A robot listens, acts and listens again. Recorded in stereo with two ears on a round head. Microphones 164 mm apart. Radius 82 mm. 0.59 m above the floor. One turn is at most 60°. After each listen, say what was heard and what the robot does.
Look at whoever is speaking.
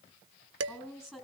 Turn 30° right.
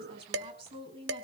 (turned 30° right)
So it is at 145° right. Turn 60° right.
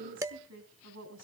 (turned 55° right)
The woman speaking is now 90° right. Turn 60° right.
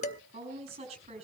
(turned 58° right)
The woman speaking is now 35° right. Turn 35° right.
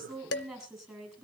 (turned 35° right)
Facing the woman speaking.